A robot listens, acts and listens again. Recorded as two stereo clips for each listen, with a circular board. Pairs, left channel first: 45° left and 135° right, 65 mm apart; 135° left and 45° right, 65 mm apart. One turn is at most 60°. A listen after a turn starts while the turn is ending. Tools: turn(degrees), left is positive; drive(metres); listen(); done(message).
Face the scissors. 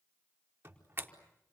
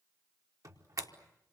turn(degrees=60)
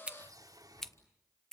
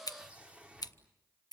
turn(degrees=60)
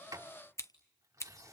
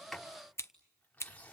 turn(degrees=60)
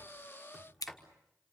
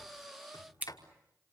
turn(degrees=20)
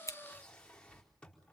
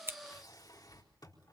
listen()
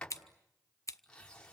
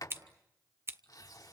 turn(degrees=10)
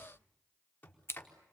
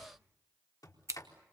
done("Facing the scissors, 1 to 2 m away.")